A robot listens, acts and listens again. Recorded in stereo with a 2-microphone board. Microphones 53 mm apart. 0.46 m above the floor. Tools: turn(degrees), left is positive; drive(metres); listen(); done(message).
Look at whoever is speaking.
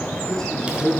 turn(degrees=30)
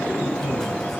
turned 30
listen()
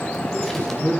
turn(degrees=145)
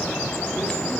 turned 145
listen()
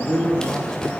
turn(degrees=-10)
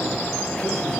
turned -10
listen()
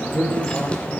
done("Facing the man speaking.")